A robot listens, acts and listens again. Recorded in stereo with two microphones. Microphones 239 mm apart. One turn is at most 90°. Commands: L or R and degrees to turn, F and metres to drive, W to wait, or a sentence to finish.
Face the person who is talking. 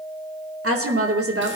R90
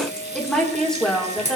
Found it: a woman speaking, straight ahead.